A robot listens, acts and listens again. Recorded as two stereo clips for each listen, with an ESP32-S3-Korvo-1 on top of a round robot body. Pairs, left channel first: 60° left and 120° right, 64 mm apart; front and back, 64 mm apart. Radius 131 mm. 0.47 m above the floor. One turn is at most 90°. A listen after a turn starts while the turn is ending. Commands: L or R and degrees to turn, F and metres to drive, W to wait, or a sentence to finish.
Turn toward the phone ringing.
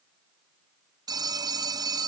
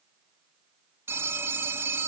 R90
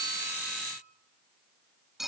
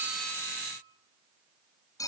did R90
R35
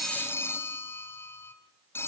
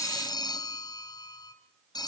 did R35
Found it: a phone ringing, straight ahead.